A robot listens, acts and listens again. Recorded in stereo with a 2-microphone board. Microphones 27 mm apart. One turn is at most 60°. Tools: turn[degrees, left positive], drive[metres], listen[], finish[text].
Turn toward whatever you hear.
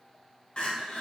Thought: The crying: about 40° left or 140° left.
Action: turn[40]
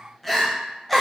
Action: finish[Found it: crying, straight ahead, under 1 m away.]